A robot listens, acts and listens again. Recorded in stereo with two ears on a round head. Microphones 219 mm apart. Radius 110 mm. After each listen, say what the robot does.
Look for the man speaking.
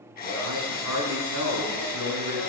Turn 90° right.
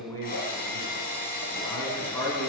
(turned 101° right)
Turn 15° left.
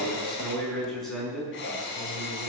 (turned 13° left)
Facing the man speaking, over 4 m away.